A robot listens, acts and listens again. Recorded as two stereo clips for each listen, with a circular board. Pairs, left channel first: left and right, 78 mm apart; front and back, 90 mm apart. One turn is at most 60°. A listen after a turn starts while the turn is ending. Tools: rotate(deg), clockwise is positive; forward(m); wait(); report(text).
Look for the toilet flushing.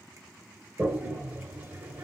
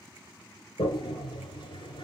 rotate(20)
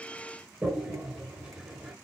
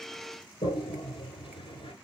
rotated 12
rotate(10)
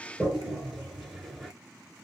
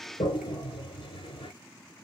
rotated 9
report("Facing the toilet flushing.")